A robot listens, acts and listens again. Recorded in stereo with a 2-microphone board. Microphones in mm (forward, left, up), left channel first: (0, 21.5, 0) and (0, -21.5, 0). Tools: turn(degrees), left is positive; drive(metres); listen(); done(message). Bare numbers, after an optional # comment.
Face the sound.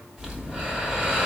# The breathing: about 20° right or 160° right.
turn(-20)
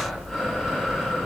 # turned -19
done("Facing the breathing.")